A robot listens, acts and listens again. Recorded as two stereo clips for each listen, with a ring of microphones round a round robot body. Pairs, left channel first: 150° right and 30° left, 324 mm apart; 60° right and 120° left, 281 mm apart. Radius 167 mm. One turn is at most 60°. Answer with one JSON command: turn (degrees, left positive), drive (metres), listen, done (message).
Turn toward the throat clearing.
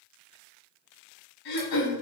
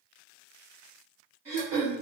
{"turn": -60}
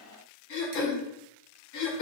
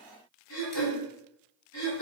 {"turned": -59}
{"turn": -60}
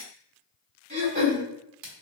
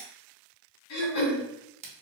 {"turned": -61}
{"turn": -35}
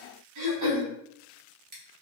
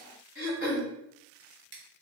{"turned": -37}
{"done": "Found it: throat clearing, straight ahead, 1 to 2 m away."}